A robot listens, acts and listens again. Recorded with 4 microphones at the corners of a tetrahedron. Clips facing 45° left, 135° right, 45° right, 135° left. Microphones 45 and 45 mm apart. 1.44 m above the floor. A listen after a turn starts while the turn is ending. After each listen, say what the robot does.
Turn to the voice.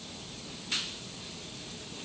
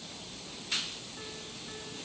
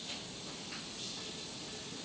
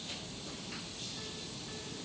Keep listening.
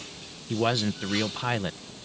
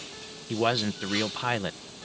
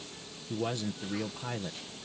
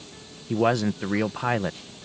Turn 140° left.
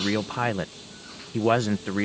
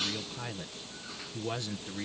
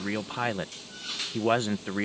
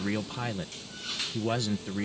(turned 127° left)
Turn 15° left.
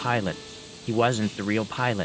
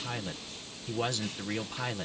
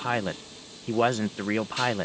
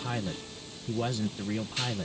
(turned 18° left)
Turn 10° right.
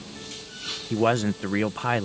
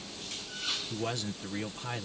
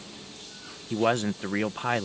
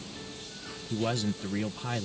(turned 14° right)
Facing the man speaking.